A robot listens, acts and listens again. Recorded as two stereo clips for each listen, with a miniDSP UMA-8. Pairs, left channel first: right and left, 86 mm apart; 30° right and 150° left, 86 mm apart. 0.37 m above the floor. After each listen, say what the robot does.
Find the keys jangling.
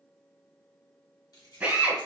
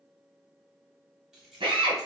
Turn 125° right.
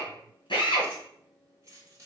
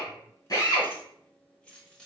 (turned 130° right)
Turn 50° left.
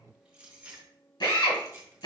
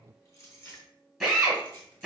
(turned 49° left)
Turn 30° left.
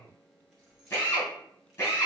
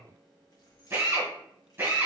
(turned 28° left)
Facing the keys jangling.